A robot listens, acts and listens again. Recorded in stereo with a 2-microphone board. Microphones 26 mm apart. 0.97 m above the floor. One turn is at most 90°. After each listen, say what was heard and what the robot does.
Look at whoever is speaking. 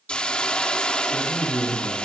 The man speaking: about 15° left or 165° left. Turn 15° left.
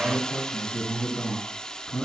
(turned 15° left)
So it is at 150° left. Turn 90° left.
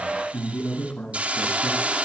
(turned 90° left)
The man speaking is now 60° left. Turn 60° left.
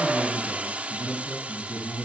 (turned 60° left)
Found it: a man speaking, straight ahead, over 4 m away.